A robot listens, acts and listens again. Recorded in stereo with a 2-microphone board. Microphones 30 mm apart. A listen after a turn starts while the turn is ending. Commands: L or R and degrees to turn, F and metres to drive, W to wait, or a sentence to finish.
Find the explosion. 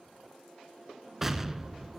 R30
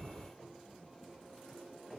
R140
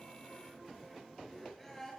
I heard an explosion from this way, but can't make it out now.